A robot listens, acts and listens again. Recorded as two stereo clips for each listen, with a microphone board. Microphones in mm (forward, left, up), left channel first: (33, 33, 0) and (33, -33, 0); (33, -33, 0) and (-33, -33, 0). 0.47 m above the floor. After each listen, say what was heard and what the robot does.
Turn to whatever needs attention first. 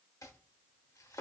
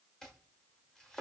Keep listening.
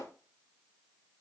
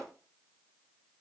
Keep listening.
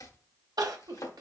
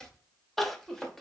The crying: 85° right. Turn 85° right.
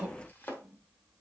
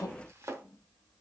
The crying is now 25° right. Turn 25° right.
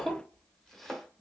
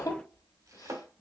Found it: crying, straight ahead.